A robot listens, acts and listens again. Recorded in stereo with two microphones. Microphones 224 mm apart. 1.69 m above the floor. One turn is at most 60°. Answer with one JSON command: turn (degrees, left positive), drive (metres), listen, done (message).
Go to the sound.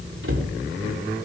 {"turn": -60}
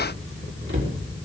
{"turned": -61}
{"turn": -55}
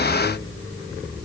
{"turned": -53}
{"listen": true}
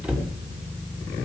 {"drive": 1.0}
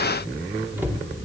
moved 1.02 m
{"turn": -10}
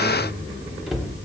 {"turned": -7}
{"drive": 1.0}
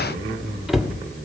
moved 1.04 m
{"drive": 1.0}
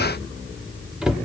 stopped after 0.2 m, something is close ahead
{"done": "I am next to the cupboard door."}